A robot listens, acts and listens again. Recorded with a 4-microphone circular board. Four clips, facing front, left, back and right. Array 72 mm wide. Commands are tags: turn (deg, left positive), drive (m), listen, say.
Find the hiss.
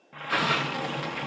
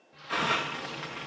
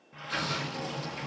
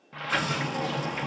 <turn deg="30"/>
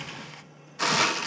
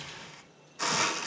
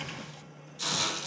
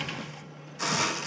<say>Facing the hiss.</say>